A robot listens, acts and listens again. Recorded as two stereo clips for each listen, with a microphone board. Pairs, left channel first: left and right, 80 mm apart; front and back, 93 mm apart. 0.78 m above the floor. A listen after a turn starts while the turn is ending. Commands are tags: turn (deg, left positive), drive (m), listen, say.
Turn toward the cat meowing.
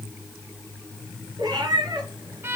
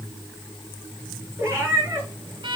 <turn deg="-120"/>
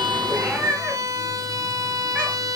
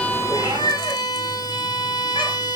<turn deg="-15"/>
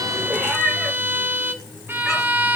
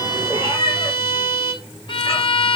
<say>Found it: a cat meowing, straight ahead.</say>